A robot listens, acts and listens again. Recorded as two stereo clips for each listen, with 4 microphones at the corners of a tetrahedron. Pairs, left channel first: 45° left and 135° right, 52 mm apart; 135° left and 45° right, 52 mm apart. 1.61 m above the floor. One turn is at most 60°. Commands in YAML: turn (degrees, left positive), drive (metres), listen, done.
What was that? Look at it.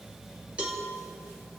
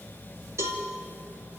turn: -60
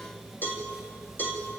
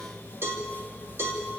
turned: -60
done: "Facing the cowbell."